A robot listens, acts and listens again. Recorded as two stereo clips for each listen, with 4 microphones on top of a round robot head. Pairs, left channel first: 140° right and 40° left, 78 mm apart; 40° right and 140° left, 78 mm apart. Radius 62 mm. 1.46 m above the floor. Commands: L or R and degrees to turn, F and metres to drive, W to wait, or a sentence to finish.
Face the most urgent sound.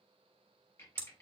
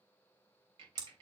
W
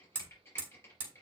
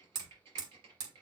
W
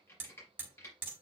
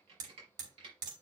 I can't make out anything urgent, only hammering and typing on a keyboard.